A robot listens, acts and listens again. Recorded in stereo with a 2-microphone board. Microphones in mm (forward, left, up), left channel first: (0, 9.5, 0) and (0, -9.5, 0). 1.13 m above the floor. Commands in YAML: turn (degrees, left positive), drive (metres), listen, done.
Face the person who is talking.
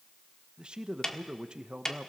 turn: -55
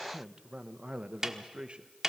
turn: -65
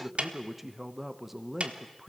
done: "Found it: a man speaking, straight ahead."